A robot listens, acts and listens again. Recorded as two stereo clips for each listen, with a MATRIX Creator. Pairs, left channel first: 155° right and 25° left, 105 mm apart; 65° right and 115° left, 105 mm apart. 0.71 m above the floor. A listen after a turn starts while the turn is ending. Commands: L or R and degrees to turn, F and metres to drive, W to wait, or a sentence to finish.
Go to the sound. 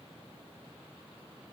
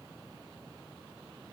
W
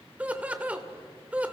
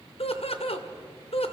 R55
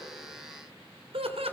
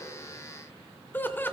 F1.0
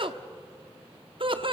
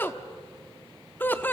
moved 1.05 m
F1.0
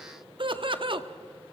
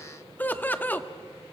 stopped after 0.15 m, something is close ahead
Arrived at the laughter, straight ahead.